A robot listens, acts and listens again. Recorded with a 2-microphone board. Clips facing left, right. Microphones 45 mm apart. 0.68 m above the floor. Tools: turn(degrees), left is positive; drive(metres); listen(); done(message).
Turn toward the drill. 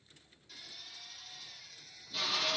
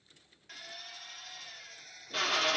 turn(degrees=-60)
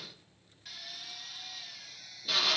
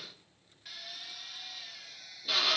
turn(degrees=-10)
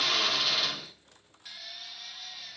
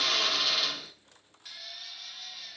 done("Found it: a drill, straight ahead, 1 to 2 m away.")